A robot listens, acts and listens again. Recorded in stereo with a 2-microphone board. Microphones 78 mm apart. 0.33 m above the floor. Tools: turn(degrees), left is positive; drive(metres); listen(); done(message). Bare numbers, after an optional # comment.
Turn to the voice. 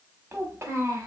# The child speaking: about 30° right or 150° right.
turn(-30)
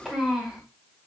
done("Facing the child speaking, 1 to 2 m away.")